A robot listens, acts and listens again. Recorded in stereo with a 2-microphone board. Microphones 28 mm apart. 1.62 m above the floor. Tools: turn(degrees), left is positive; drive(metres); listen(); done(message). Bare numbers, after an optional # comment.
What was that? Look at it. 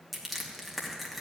turn(30)
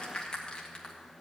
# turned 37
# So it is at 145° left.
turn(145)
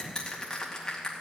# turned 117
# The crushing is now 25° left.
turn(25)
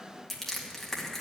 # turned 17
# The crushing is now 10° left.
turn(10)
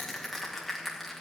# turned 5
done("Found it: crushing, straight ahead, 2 to 4 m away.")